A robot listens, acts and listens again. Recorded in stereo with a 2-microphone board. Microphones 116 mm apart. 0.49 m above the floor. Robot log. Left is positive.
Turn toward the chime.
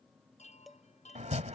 note: The chime: about 75° left or 105° left.
cmd yaw +75
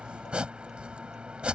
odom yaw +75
cmd idle
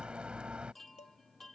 end: Facing the chime.